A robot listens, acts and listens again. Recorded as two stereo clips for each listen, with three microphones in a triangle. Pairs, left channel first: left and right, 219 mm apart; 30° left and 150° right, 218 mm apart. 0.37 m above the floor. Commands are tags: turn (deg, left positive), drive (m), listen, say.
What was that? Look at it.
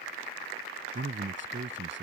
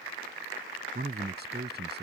<turn deg="-115"/>
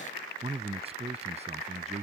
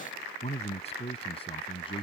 <turn deg="-35"/>
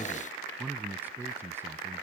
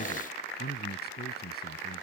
<turn deg="-10"/>
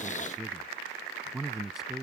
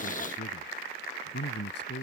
<say>Found it: a man speaking, straight ahead.</say>